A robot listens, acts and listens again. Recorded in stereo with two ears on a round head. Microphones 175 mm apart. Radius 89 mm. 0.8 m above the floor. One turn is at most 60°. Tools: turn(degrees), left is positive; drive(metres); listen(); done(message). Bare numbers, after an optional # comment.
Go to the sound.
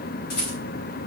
turn(60)
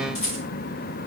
# So it is at 35° left.
turn(35)
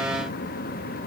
listen()
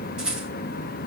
drive(1.0)
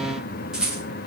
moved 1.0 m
drive(1.0)
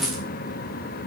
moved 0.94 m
drive(1.0)
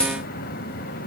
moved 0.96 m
drive(1.0)
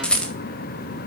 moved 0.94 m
drive(1.0)
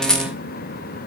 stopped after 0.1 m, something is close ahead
done("Arrived at the rattle, straight ahead.")